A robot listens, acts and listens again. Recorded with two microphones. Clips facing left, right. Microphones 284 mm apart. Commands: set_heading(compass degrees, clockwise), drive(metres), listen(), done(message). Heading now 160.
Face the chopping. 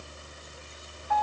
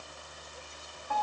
listen()
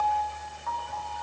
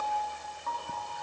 listen()
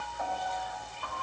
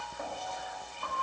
done("I can't make out chopping to turn to.")